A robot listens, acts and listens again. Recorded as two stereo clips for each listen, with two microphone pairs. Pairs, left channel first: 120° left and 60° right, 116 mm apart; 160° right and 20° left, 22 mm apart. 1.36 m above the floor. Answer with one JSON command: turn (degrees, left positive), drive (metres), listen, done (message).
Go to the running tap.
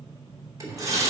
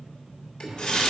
{"turn": -120}
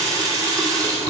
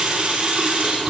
{"drive": 1.0}
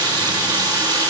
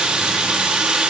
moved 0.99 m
{"turn": -10}
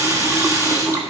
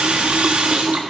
{"drive": 1.0}
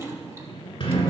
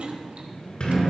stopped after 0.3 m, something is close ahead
{"listen": true}
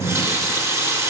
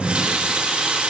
{"done": "Arrived at the running tap, straight ahead."}